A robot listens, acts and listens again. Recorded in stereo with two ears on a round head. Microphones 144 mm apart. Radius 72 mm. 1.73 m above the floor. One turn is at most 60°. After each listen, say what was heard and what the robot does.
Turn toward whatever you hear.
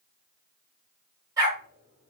The dog barking: about 20° right or 160° right. Turn 20° right.
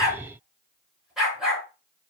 Facing the dog barking.